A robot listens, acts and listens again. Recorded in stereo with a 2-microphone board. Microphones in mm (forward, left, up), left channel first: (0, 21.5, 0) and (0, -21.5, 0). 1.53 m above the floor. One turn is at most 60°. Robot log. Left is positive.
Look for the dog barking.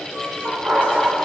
note: The dog barking: about 30° right or 150° right.
cmd yaw -30
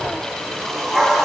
end: Facing the dog barking.